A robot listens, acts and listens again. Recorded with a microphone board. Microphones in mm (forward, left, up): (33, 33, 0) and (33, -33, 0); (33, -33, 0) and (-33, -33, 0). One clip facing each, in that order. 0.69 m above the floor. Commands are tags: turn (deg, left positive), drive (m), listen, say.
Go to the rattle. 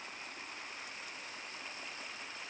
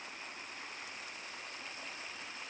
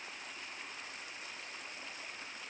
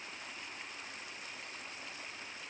<listen/>
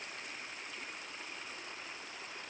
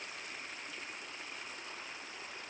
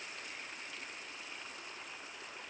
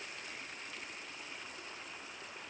<listen/>
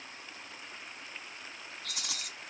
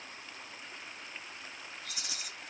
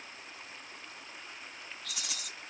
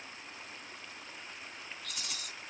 <turn deg="80"/>
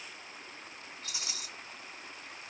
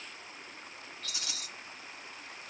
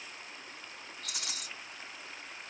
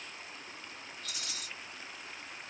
<turn deg="20"/>
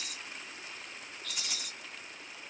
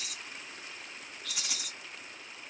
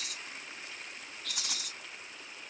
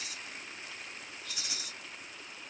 <turn deg="-10"/>
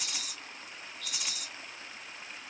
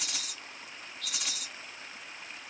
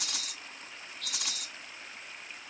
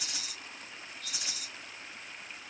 <drive m="1.0"/>
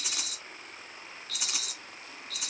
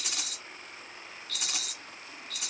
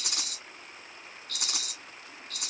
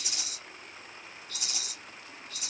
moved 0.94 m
<drive m="1.0"/>
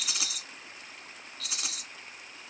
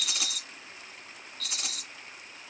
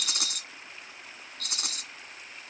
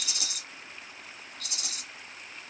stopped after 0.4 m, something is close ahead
<say>I am next to the rattle.</say>